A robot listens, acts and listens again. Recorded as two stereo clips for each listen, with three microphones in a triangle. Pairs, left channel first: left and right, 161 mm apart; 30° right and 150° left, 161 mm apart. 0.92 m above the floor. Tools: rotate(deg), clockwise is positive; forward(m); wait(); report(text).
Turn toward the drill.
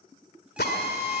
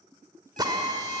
rotate(-85)
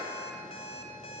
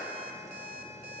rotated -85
wait()
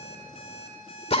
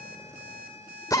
rotate(-40)
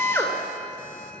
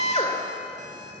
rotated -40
rotate(-15)
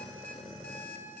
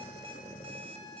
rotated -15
wait()
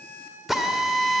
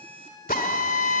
report("Found it: a drill, straight ahead.")